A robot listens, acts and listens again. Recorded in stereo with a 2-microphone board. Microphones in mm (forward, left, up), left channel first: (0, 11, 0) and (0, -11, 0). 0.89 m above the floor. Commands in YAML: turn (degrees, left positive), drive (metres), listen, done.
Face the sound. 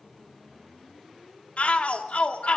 turn: 70
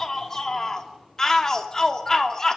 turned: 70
turn: 20
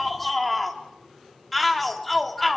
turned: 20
done: "Facing the shout, 2 to 4 m away."